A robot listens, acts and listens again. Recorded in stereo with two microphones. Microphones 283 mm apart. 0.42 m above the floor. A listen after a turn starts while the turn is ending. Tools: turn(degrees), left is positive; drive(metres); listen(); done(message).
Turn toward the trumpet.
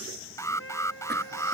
turn(degrees=50)
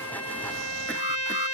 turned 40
turn(degrees=90)
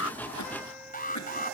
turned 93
listen()
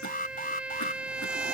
done("Facing the trumpet.")